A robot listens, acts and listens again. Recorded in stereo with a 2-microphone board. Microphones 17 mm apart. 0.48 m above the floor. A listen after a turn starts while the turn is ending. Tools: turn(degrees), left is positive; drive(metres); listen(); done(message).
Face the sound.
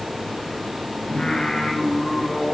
turn(degrees=70)
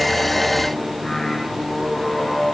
turn(degrees=30)
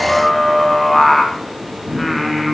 done("Found it: singing, straight ahead, 2 to 4 m away.")